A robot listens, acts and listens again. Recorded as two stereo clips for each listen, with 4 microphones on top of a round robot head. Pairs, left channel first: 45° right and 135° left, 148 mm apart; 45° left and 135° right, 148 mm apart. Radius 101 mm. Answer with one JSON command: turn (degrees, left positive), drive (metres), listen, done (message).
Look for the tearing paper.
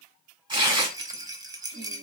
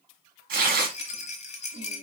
{"turn": -160}
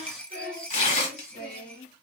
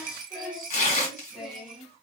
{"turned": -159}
{"done": "Facing the tearing paper, 1 to 2 m away."}